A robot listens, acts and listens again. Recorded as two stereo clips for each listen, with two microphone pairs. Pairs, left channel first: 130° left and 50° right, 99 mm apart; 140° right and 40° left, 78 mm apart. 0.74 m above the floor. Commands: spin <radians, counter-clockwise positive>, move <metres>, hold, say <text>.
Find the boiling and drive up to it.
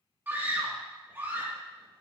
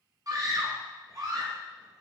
hold
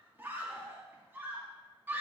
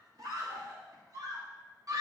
hold
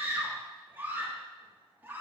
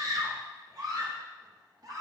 say I can't make out boiling, only a scream.